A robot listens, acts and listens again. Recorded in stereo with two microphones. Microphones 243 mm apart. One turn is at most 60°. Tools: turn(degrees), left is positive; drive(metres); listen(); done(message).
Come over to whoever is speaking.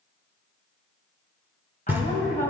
turn(degrees=35)
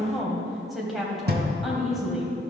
drive(metres=1.0)
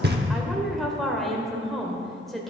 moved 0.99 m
drive(metres=1.0)
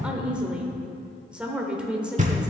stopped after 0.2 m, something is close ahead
done("I am next to the woman speaking.")